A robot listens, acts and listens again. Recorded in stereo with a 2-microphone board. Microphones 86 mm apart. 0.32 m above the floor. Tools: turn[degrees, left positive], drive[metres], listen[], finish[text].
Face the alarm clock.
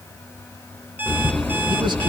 Thought: The alarm clock: about 20° right or 160° right.
Action: turn[-20]
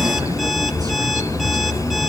Action: listen[]
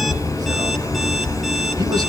Action: listen[]
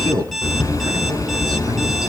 Action: finish[Facing the alarm clock.]